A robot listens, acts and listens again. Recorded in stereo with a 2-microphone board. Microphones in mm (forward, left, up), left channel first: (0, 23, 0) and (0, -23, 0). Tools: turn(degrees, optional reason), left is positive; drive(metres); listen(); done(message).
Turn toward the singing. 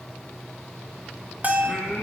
turn(degrees=30)
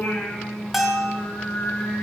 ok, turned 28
turn(degrees=15, reason="The singing: about 15° left or 165° left.")
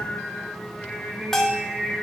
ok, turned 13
turn(degrees=-30)
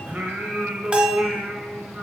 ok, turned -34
turn(degrees=-140, reason="So it is at 140° right.")
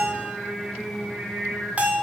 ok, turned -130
done("Facing the singing, 1 to 2 m away.")